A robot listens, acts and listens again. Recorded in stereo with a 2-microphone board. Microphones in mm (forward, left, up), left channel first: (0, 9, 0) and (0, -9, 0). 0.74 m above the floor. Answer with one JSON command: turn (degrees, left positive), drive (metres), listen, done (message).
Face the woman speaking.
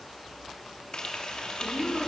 {"turn": -30}
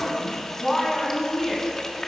{"done": "Facing the woman speaking, over 4 m away."}